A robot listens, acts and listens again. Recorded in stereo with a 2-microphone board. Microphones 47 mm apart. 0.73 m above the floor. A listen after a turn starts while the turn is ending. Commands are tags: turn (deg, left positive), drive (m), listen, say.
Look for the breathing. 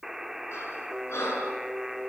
<turn deg="75"/>
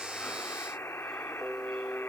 <listen/>
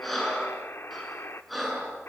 <say>Facing the breathing.</say>